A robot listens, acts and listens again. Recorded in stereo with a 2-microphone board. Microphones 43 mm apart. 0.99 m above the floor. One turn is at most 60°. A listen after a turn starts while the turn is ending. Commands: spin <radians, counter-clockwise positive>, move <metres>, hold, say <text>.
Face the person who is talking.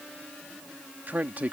spin -0.79
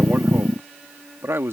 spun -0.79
spin -1.05
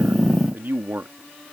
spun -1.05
spin -0.96
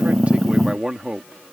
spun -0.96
spin -0.26
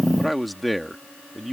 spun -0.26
say Facing the man speaking.